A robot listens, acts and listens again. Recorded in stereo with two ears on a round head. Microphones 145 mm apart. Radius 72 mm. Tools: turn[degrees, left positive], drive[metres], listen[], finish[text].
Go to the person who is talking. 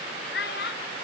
Thought: The child speaking: about 75° left or 105° left.
Action: turn[75]
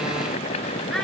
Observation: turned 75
Action: listen[]
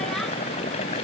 Action: listen[]
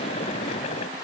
Action: finish[I heard a child speaking, but can't make it out now. It was about straight ahead or 30° left. I did not reach it.]